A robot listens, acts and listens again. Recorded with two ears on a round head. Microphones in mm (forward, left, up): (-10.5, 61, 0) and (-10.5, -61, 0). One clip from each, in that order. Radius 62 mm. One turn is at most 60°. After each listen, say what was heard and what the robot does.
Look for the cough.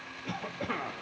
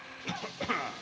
The cough: about 45° right or 135° right. Turn 45° right.
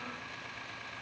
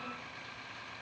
Keep listening.
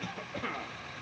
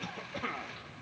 So it is at 15° right. Turn 15° right.
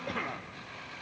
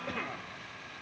Facing the cough, under 1 m away.